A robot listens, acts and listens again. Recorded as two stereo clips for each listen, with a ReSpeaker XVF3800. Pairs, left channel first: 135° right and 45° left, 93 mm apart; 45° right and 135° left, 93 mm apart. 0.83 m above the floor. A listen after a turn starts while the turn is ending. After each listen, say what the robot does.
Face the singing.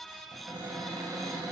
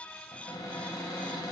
Keep listening.
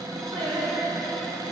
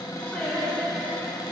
Turn 40° left.
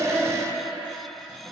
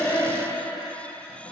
Found it: singing, straight ahead, over 4 m away.